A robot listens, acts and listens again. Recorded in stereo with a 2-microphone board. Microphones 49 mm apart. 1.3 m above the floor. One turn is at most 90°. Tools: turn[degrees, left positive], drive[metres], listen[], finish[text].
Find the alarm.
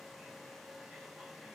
Action: listen[]
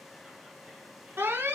Thought: The alarm: about 55° right or 125° right.
Action: turn[-55]
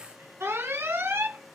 Thought: So it is at 70° right.
Action: turn[-70]
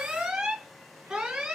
Thought: The alarm is now 15° right.
Action: turn[-15]
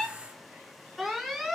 Action: finish[Facing the alarm.]